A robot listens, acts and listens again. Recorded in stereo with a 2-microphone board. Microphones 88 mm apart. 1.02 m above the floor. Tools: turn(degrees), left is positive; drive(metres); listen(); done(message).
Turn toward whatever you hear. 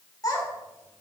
turn(degrees=40)
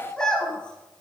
turn(degrees=10)
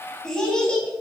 turn(degrees=10)
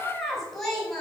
done("Facing the child speaking.")